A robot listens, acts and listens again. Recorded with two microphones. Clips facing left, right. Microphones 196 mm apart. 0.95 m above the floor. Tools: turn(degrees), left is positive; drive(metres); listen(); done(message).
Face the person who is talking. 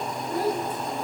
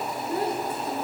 turn(degrees=-25)
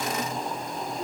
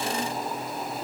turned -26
listen()
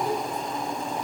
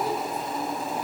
done("Facing the child speaking.")